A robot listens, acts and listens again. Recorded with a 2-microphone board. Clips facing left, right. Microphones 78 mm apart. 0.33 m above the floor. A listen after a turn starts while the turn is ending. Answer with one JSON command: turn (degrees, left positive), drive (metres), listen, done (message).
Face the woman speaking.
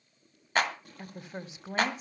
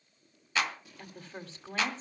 {"turn": 30}
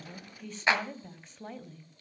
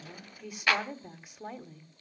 {"turn": -15}
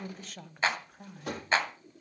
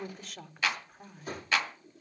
{"done": "Facing the woman speaking."}